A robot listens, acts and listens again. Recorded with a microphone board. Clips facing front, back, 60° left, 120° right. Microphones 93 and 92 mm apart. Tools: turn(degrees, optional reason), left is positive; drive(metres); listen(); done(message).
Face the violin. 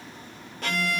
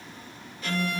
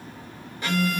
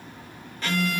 turn(degrees=-15, reason="The violin: 15° right.")
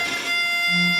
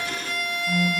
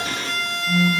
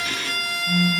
done("Facing the violin, 1 to 2 m away.")